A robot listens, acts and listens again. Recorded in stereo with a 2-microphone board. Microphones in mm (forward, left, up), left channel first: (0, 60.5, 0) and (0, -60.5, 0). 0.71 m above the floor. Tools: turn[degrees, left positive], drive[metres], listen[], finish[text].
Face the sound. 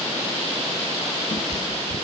Thought: The cat meowing: about 50° left or 130° left.
Action: turn[50]
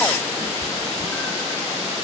Thought: So it is at 10° left.
Action: turn[10]
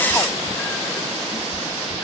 Thought: The cat meowing is now 10° left.
Action: turn[10]
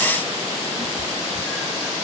Action: finish[Facing the cat meowing, over 4 m away.]